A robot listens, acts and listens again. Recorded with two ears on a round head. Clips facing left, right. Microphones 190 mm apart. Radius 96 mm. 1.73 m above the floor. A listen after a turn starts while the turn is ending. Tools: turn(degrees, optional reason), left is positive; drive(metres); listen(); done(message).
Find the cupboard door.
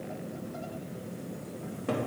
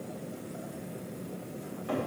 turn(degrees=55, reason="The cupboard door: about 55° left or 125° left.")
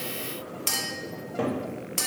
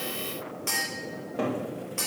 done("Found it: a cupboard door, straight ahead, 2 to 4 m away.")